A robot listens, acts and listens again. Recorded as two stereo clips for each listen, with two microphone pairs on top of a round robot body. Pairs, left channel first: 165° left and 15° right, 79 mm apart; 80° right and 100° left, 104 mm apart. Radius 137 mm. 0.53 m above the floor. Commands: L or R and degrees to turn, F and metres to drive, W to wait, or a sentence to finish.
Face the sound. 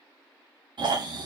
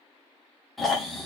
L10
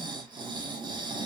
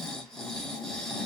Found it: snoring, straight ahead, 1 to 2 m away.